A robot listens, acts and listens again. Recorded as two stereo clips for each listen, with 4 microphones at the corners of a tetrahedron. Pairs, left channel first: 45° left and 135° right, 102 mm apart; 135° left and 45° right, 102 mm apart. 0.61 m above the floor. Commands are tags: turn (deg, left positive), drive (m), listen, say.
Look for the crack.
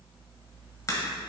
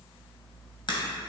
<turn deg="100"/>
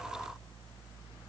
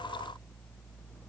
<say>Facing where the crack came from. I can't hear it now.</say>